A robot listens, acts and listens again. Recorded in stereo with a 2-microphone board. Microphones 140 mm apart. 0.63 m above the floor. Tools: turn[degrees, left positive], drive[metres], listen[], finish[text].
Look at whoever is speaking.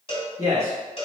Thought: The man speaking: about 25° right or 155° right.
Action: turn[-25]
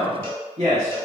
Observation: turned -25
Thought: So it is at 130° right.
Action: turn[-130]
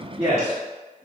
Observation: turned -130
Action: finish[Facing the man speaking, 1 to 2 m away.]